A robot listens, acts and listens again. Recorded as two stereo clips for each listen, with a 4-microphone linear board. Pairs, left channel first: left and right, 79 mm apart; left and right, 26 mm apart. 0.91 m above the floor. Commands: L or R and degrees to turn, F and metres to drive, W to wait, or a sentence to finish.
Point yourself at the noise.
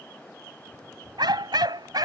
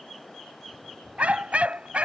R60
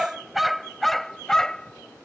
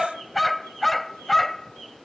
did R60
L10
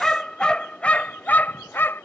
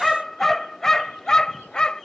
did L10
L30
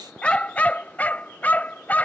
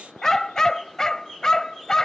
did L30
L20
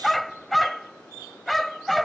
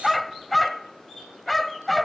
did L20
Facing the dog barking.